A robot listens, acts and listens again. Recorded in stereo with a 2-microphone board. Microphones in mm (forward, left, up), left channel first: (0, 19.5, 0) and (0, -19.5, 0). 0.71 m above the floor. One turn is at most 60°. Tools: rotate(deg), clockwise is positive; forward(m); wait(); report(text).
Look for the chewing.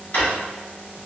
wait()
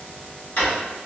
wait()
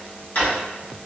report("I can't make out chewing to turn to.")